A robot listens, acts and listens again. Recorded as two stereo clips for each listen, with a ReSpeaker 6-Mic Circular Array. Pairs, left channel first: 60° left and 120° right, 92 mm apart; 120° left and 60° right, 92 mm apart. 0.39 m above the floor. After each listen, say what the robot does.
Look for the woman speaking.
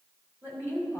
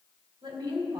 Turn 55° right.
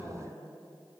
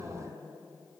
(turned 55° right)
Turn 10° right.
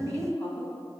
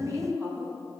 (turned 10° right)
Turn 10° right.
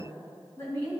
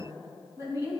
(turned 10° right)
Turn 10° right.
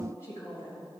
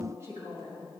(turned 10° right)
Facing the woman speaking.